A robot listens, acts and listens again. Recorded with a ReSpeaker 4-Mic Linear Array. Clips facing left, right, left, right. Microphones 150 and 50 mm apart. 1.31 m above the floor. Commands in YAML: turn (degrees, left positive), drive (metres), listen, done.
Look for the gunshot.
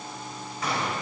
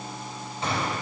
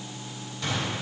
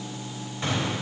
turn: -30
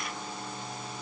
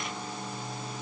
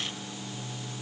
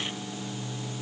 listen: true
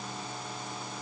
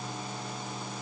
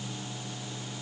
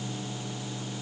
done: "I heard a gunshot, but can't make it out now. It was about straight ahead or 120° right."